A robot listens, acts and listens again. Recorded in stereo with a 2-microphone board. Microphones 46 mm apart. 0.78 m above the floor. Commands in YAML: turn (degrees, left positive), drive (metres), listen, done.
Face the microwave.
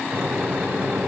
turn: -35
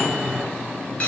done: "Facing the microwave."